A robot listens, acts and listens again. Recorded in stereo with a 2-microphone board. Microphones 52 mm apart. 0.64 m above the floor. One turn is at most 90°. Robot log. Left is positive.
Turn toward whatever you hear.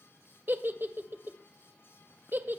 note: The giggle: about 45° right or 135° right.
cmd yaw -45
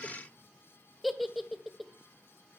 end: Found it: a giggle, straight ahead, 1 to 2 m away.